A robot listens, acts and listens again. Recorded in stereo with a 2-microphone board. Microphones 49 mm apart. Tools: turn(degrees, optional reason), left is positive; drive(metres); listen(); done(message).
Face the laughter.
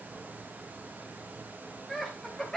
turn(degrees=30)
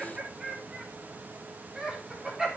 turn(degrees=-10, reason="So it is at 10° right.")
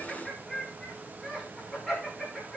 done("Facing the laughter, over 4 m away.")